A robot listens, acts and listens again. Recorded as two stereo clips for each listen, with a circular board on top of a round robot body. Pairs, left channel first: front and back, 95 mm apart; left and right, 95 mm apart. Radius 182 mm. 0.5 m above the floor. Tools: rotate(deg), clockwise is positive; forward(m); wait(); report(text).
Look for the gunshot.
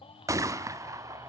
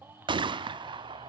rotate(125)
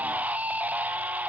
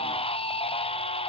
report("Facing where the gunshot came from. I can't hear it now.")